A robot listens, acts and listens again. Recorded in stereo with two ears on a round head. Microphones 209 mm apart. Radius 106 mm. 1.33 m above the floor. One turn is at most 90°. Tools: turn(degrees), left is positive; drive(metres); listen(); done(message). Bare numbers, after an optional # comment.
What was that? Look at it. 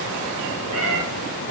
turn(-90)
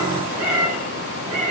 done("Found it: a cat meowing, straight ahead.")